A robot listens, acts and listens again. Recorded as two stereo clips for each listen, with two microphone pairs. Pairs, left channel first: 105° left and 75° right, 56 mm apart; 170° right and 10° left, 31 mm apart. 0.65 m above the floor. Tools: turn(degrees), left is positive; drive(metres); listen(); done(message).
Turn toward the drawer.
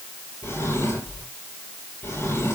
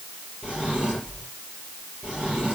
turn(degrees=70)
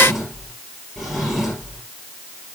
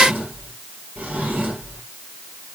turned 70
turn(degrees=15)
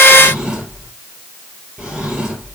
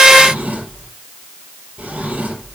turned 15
done("Found it: a drawer, straight ahead, over 4 m away.")